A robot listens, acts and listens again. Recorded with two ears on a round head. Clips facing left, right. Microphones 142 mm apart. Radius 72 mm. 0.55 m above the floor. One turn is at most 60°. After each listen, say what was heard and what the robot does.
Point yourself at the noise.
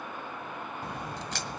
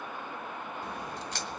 The crack: about 65° left or 115° left. Turn 60° left.
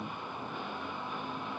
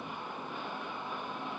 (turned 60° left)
Keep listening.
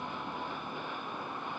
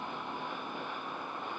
I heard a crack, but can't make it out now. It was about 5° left or 55° left.